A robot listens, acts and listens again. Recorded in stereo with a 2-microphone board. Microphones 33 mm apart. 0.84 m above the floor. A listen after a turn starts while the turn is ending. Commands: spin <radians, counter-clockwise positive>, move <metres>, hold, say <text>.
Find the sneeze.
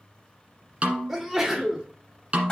spin -0.52
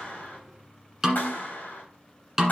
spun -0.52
hold
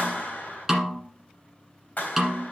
say I heard a sneeze, but can't make it out now. It was about 20° left or 140° right.